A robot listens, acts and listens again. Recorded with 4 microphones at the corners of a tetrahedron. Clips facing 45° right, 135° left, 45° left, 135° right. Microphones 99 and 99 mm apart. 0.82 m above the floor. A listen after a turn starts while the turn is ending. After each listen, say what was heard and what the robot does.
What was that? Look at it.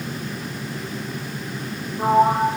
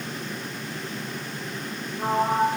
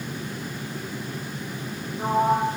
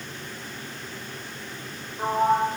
The sliding door: 90° right. Turn 90° right.
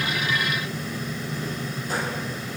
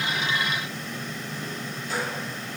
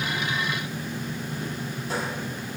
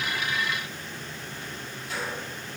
Keep listening.
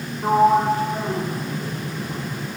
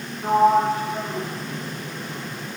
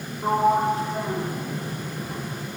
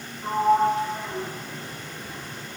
Found it: a sliding door, straight ahead.